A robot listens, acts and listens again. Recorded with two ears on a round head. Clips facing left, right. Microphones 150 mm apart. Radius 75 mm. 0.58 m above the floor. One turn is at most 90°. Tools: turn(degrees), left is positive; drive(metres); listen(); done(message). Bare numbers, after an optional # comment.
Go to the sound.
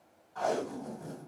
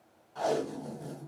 # The tape being pulled: about 30° right or 150° right.
turn(-30)
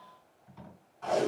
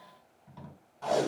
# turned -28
# So it is at 120° right.
turn(-90)
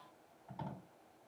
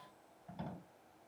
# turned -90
# The tape being pulled is now 30° right.
turn(-30)
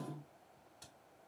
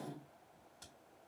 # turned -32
drive(1.0)
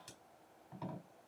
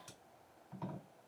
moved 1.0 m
# The tape being pulled is now 10° left.
turn(10)
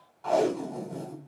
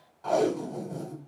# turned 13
drive(1.0)
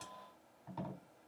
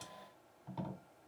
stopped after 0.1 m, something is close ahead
done("I am next to the tape being pulled.")